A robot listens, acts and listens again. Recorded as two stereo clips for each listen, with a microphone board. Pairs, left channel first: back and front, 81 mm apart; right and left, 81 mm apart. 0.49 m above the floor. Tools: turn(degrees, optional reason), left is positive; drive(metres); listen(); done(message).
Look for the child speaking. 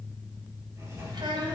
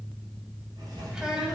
turn(degrees=10, reason="The child speaking: 10° left.")
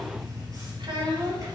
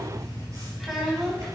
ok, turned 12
done("Found it: a child speaking, straight ahead.")